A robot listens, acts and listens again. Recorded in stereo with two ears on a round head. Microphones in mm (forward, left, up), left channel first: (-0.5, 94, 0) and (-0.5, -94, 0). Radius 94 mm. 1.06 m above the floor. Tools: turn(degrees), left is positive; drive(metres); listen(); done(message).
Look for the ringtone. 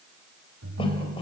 turn(degrees=-65)
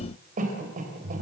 turn(degrees=-50)
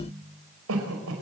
turn(degrees=-15)
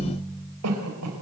done("Facing the ringtone, 2 to 4 m away.")